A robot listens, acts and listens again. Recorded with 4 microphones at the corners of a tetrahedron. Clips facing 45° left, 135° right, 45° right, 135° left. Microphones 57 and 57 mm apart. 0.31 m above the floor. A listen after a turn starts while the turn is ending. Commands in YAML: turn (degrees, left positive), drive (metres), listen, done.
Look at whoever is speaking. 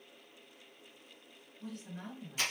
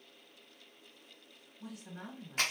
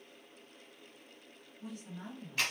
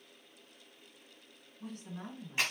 turn: 150
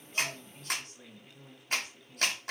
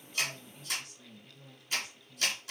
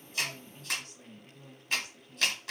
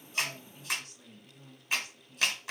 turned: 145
done: "Found it: a woman speaking, straight ahead, 2 to 4 m away."